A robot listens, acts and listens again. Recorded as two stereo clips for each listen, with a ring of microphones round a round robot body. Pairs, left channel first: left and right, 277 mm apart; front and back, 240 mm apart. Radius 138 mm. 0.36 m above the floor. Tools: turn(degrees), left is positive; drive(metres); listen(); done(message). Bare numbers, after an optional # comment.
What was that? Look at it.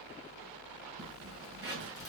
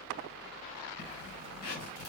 # The zipper: 15° right.
turn(-15)
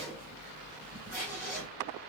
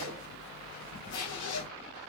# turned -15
done("Facing the zipper.")